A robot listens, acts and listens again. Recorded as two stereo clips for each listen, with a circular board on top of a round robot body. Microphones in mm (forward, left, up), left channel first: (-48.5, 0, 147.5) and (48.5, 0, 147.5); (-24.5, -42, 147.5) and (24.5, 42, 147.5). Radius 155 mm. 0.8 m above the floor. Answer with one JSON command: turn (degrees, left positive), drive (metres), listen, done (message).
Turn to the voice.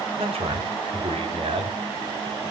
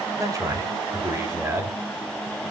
{"done": "Found it: a man speaking, straight ahead, 2 to 4 m away."}